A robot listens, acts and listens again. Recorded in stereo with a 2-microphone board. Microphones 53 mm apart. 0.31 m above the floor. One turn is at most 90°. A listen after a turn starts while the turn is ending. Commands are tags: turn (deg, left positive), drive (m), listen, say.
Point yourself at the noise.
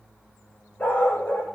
<turn deg="25"/>
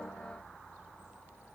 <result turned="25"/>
<listen/>
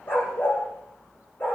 <turn deg="40"/>
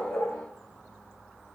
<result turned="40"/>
<listen/>
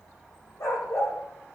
<turn deg="90"/>
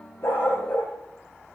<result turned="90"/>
<turn deg="25"/>
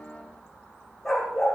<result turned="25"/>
<say>Found it: a dog barking, straight ahead.</say>